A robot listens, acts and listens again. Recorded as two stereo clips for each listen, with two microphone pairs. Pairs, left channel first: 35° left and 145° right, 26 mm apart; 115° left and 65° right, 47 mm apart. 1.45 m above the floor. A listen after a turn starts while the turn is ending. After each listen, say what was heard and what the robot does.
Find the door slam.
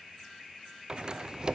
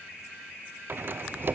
The door slam: 95° right. Turn 95° right.
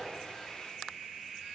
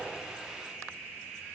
Facing where the door slam came from. I can't hear it now.